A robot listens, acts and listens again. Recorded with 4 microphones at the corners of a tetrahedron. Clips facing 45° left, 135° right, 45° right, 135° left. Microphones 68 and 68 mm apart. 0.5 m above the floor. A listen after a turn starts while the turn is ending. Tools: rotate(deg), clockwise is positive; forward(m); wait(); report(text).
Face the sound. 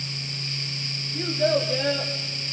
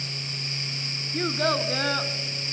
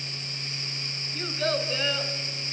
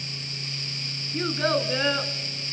rotate(165)
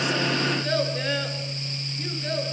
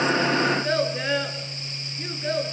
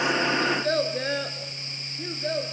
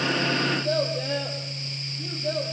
rotate(60)
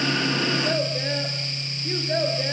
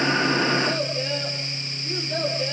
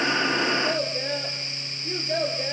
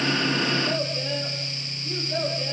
report("Found it: a child speaking, straight ahead.")